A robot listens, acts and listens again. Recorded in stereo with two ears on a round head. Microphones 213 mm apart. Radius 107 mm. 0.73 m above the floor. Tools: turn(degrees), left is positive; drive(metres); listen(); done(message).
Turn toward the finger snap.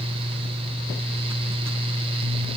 listen()
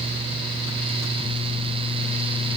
listen()
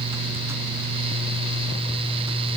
done("I can't make out a finger snap.")